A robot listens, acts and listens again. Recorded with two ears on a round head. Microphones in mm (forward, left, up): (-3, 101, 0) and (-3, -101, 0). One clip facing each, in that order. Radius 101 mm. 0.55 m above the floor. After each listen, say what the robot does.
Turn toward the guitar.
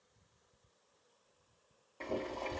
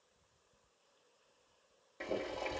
Keep listening.
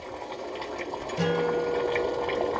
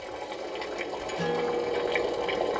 Turn 70° left.
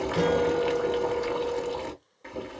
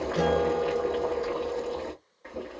Keep listening.
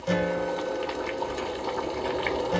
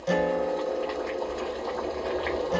Found it: a guitar, straight ahead.